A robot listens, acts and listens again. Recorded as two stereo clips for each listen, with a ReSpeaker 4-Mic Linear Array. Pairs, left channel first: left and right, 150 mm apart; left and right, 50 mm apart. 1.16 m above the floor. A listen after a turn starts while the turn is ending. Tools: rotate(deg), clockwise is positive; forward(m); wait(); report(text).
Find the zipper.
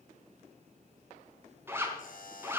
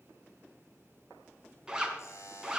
rotate(15)
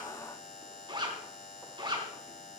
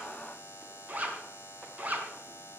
rotate(150)
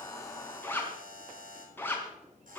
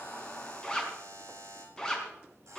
rotate(-15)
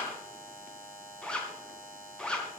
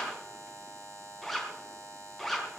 report("Facing the zipper.")